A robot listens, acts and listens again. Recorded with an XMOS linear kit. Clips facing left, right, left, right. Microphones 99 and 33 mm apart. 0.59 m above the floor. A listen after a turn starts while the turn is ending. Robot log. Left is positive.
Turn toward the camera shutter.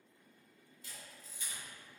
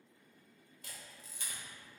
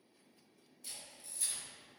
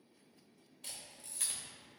cmd yaw -90
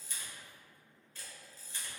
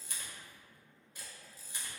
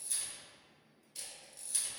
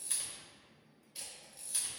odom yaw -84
note: So it is at 15° right.
cmd yaw -15
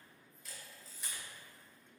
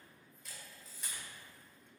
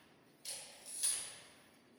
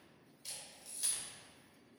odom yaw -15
end: Found it: a camera shutter, straight ahead.